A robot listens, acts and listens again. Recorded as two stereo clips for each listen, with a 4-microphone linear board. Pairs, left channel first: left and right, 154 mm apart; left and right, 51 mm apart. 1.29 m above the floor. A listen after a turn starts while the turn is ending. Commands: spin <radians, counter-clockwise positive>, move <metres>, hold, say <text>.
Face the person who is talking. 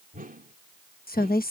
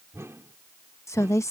spin 1.31
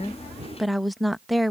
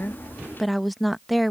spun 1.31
say Facing the woman speaking.